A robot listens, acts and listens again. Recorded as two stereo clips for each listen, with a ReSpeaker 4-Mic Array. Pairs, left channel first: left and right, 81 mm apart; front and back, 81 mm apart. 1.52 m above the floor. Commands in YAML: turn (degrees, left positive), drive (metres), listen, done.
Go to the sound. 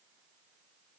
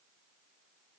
listen: true
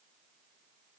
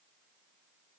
listen: true
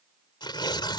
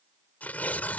turn: 70
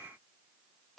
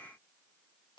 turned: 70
listen: true
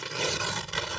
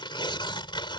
drive: 1.0
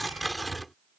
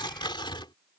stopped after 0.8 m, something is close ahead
done: "Blocked. The tearing paper is further on, straight ahead."